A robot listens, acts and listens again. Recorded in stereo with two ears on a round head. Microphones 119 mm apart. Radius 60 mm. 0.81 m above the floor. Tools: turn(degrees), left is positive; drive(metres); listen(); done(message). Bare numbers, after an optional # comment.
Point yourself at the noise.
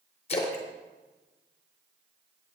# The splash: about 45° left or 135° left.
turn(45)
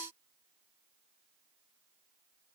listen()
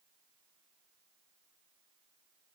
done("I heard a splash, but can't make it out now. It was about straight ahead or 90° left.")